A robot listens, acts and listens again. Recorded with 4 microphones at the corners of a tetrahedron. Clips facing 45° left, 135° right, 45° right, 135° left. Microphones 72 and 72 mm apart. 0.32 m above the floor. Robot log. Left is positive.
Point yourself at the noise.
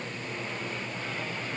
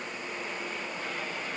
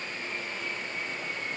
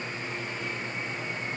cmd idle
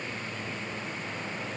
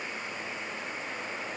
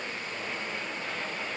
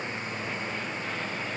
cmd idle
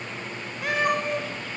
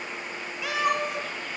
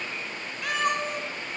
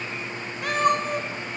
note: The cat meowing: 90° left.
cmd yaw +90
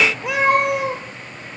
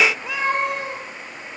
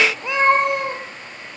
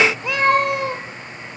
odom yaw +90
note: The cat meowing is now 25° left.
cmd yaw +25
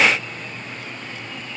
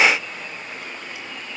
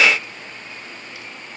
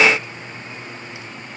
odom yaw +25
cmd idle
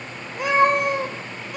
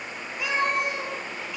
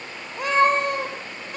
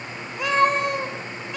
end: Facing the cat meowing.